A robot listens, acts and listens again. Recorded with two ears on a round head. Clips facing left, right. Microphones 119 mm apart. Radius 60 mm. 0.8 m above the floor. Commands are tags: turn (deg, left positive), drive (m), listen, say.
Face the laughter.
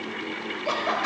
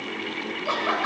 <turn deg="20"/>
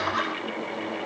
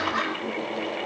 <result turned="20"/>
<say>Found it: laughter, straight ahead, 2 to 4 m away.</say>